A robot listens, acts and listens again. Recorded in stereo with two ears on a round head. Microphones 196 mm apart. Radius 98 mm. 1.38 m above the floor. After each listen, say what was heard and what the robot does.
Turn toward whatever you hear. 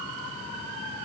Keep listening.
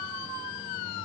Keep listening.
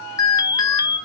The alarm: about 20° left or 160° left. Turn 20° left.
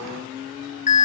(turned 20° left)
So it is at 145° left. Turn 145° left.
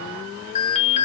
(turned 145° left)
The alarm is now 30° left. Turn 30° left.
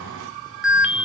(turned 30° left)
Found it: an alarm, straight ahead.